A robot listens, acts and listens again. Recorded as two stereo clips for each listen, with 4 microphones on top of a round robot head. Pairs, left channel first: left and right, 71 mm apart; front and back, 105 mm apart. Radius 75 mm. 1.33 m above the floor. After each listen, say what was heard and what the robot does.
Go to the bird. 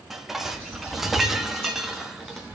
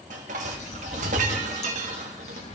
The bird: 15° left. Turn 15° left.
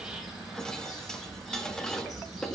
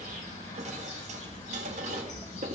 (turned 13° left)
Drive 1.0 m forward.
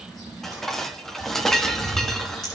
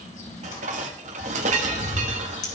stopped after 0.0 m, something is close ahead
Something is in my way. I am facing the bird but have not reached it.